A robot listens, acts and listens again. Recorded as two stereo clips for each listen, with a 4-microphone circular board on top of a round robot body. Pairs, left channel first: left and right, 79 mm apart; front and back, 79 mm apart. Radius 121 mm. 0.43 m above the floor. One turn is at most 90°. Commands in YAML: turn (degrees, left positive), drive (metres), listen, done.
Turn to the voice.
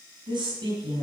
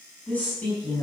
turn: -70
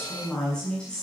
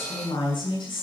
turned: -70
turn: 10
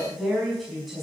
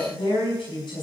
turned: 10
done: "Found it: a woman speaking, straight ahead."